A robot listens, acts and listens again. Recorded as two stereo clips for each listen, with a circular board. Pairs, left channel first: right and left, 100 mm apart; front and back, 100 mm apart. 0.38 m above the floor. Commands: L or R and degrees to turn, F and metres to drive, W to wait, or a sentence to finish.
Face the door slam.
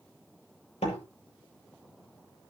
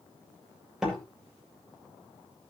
R95
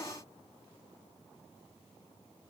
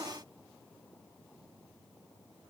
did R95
Facing where the door slam came from. I can't hear it now.